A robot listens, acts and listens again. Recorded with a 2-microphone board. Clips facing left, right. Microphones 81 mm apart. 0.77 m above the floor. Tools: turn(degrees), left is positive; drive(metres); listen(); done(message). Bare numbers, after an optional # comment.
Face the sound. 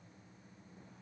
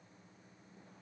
listen()
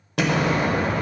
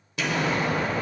# The explosion: about 60° left or 120° left.
turn(60)
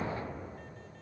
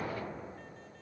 listen()
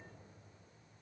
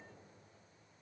done("I heard an explosion, but can't make it out now. It was about straight ahead or 60° left.")